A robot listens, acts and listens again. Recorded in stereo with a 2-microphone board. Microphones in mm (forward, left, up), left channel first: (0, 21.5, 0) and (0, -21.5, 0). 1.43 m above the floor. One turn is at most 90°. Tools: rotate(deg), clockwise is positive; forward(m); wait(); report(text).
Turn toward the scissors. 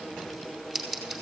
rotate(30)
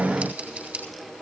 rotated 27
rotate(90)
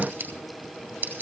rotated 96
rotate(45)
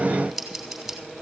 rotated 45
report("Facing the scissors.")